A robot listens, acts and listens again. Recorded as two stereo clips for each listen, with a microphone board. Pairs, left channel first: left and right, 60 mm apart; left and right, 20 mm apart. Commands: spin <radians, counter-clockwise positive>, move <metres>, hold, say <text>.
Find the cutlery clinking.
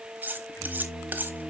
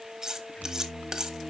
spin -0.52
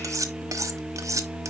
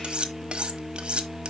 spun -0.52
spin -2.09
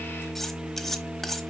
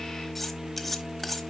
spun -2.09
say Facing the cutlery clinking, 1 to 2 m away.